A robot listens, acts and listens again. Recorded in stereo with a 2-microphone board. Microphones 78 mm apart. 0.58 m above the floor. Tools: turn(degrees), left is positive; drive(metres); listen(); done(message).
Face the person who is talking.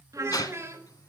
turn(degrees=-35)
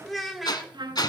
done("Facing the child speaking, 1 to 2 m away.")